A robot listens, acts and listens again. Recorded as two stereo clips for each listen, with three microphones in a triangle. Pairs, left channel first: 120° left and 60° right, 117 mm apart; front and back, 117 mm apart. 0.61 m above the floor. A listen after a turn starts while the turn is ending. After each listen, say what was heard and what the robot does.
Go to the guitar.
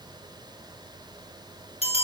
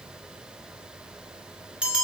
Keep listening.
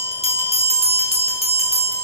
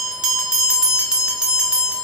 Keep listening.
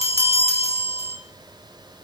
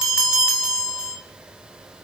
I can't make out a guitar to turn to.